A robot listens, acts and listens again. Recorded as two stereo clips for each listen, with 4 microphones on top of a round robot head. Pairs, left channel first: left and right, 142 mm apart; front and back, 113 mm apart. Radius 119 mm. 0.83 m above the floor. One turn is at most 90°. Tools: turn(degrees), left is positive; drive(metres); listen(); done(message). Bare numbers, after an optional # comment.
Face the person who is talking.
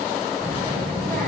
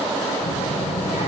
done("Found it: a child speaking, straight ahead.")